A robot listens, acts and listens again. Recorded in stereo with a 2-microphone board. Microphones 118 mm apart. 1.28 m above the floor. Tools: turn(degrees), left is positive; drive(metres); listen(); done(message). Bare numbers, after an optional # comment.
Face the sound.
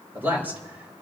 # The man speaking: about 15° right or 165° right.
turn(-15)
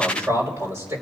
# The man speaking: about 20° right or 160° right.
turn(-20)
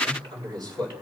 # So it is at 140° right.
turn(-140)
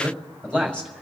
# The man speaking is now 10° left.
turn(10)
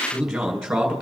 done("Found it: a man speaking, straight ahead.")